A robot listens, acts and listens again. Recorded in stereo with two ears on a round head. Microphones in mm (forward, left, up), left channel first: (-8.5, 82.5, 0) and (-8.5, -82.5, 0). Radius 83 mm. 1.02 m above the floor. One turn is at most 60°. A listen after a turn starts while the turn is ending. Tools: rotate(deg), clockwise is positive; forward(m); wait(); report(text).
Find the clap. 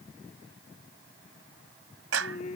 rotate(60)
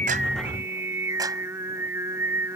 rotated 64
rotate(25)
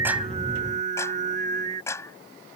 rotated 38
rotate(-15)
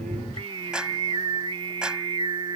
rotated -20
report("Facing the clap.")